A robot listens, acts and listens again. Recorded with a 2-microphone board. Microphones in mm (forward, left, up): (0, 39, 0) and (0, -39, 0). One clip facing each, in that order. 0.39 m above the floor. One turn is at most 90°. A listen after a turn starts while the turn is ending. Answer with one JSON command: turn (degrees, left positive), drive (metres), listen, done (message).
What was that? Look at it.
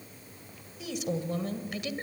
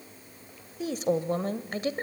{"turn": -40}
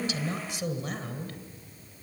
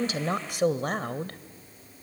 {"turn": -90}
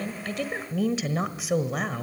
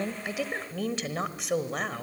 {"done": "Found it: a woman speaking, straight ahead, 1 to 2 m away."}